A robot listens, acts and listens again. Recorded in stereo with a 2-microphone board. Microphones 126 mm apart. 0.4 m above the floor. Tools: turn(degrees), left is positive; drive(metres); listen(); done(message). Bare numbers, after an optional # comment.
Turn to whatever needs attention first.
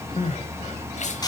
# The crying: about 70° left or 110° left.
turn(70)
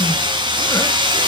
listen()
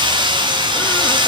listen()
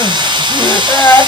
# So it is at 25° left.
turn(25)
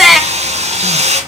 done("Facing the crying, 1 to 2 m away.")